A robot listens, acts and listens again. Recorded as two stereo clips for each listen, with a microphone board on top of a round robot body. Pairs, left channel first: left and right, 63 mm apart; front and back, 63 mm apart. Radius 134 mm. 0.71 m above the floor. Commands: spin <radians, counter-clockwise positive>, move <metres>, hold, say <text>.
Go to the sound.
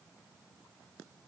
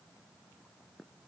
hold
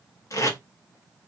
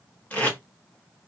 spin 1.13
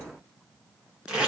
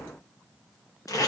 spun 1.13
spin -0.17
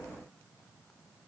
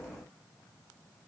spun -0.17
hold
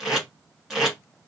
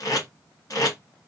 move 1.0
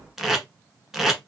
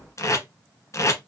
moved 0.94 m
move 1.0
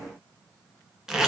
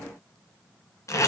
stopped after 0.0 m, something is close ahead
spin -0.17
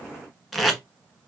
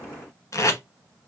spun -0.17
say Arrived at the tape being pulled, straight ahead.